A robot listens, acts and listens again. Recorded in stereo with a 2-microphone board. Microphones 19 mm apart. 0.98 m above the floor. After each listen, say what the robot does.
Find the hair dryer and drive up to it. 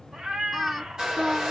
Turn 55° right.
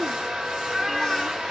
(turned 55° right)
Turn 70° right.
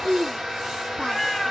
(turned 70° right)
Turn 30° right.
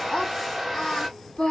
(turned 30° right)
Turn 10° right.
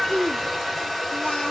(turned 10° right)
Drive 1.0 m forward.
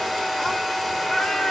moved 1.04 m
Drive 1.0 m forward.
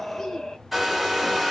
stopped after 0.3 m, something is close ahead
Turn 10° right.
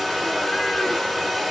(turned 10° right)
I am next to the hair dryer.